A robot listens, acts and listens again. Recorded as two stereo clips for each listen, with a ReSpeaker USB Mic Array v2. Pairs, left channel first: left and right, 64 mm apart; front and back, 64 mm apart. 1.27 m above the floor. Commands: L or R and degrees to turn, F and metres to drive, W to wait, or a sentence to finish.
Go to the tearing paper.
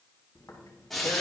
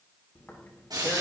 L55
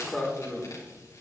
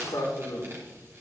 F1.0
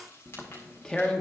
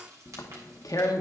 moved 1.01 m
L10
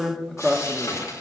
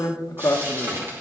F1.0
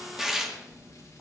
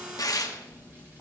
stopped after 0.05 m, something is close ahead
R10
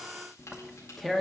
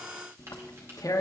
I am next to the tearing paper.